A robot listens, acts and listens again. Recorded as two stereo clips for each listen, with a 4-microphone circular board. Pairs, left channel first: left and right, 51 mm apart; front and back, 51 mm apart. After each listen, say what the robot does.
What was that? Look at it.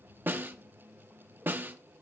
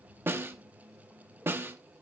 Turn 140° right.
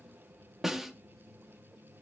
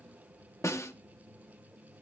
Turn 10° right.
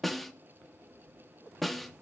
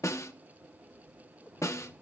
Facing the snare drum.